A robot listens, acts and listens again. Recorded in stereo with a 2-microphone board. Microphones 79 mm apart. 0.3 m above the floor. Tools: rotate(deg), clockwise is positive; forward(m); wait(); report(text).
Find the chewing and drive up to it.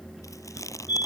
rotate(-45)
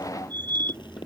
wait()
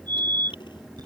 wait()
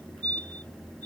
report("I heard chewing, but can't make it out now. It was about straight ahead or 90° left. I did not reach it.")